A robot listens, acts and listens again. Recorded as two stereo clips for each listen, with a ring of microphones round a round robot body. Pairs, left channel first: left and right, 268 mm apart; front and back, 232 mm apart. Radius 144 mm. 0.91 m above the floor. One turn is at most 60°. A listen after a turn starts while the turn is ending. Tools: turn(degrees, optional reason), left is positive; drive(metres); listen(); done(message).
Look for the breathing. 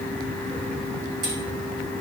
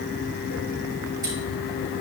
listen()
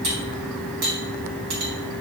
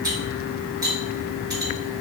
listen()
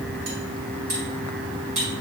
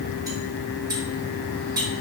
done("I can't make out breathing, only cutlery clinking.")